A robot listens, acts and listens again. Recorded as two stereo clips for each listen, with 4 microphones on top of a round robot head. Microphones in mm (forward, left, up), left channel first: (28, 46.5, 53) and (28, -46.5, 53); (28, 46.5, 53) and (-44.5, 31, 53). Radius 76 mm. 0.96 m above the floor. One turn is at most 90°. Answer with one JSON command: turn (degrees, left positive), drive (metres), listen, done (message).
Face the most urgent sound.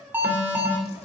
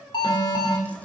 {"turn": -20}
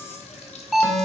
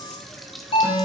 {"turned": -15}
{"done": "Found it: an alarm, straight ahead."}